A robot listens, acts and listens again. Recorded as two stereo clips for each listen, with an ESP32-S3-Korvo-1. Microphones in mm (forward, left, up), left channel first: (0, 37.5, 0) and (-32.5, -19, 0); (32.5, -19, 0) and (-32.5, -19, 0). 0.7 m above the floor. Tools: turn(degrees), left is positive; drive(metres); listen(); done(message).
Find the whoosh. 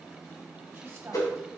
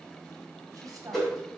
turn(degrees=85)
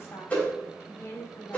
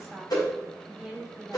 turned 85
done("Facing the whoosh.")